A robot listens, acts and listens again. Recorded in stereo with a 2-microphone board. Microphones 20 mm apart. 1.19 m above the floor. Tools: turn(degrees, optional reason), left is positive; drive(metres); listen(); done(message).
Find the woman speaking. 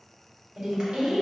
turn(degrees=-60, reason="The woman speaking: about 60° right or 120° right.")
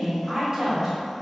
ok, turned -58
turn(degrees=-25, reason="So it is at 25° right.")
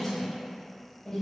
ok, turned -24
turn(degrees=30, reason="The woman speaking is now 30° left.")
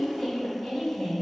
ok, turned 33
turn(degrees=15, reason="The woman speaking is now 15° left.")
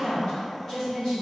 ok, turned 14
done("Facing the woman speaking.")